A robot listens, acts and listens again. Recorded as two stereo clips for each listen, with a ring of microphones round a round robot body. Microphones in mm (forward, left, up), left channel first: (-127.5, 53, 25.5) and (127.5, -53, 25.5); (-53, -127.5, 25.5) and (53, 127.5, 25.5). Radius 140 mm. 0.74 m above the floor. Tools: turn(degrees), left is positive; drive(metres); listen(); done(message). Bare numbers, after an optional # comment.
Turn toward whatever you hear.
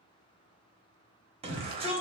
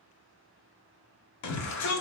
# The shout: 90° right.
turn(-90)
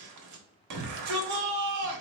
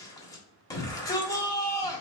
# The shout is now 35° right.
turn(-35)
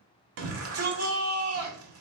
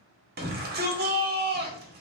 # The shout is now 15° left.
turn(15)
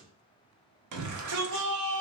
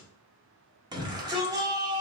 # The shout is now 10° right.
turn(-10)
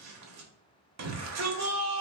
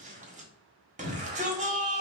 done("Found it: a shout, straight ahead.")